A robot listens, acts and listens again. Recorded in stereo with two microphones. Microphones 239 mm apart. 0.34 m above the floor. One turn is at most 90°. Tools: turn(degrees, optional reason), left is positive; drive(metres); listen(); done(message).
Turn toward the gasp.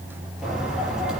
listen()
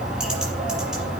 listen()
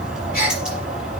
turn(degrees=35, reason="The gasp: about 35° left or 145° left.")
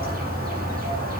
listen()
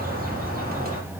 done("I heard a gasp, but can't make it out now. It was about straight ahead or 110° left.")